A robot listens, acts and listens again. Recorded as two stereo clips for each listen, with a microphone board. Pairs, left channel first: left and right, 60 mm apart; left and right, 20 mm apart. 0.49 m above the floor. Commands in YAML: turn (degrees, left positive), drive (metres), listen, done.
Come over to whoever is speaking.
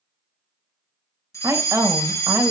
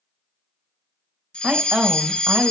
turn: -60
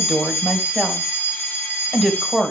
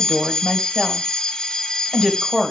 turn: -10
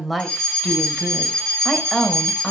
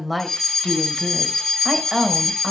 drive: 1.0
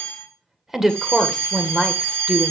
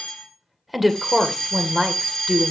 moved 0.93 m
drive: 1.0
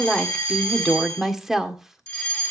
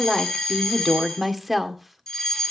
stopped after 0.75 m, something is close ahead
turn: -10
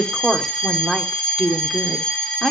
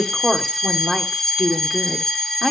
done: "Arrived at the woman speaking, straight ahead."